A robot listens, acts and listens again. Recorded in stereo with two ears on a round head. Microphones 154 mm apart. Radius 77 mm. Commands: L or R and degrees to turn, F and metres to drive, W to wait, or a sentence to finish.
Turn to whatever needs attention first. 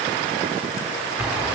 W
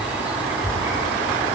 W
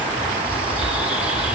I can't make out anything urgent to turn to.